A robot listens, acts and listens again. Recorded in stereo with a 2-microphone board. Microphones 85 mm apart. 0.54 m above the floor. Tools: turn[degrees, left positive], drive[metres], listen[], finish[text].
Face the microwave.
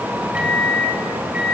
Action: turn[-30]
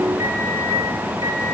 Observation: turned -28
Action: listen[]
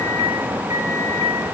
Action: listen[]
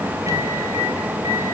Action: finish[I heard a microwave, but can't make it out now. It was about 15° left or 140° right.]